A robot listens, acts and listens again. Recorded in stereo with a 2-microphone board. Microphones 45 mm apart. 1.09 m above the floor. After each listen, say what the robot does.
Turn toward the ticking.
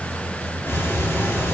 Turn 55° left.
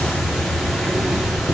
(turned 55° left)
Facing the ticking, 2 to 4 m away.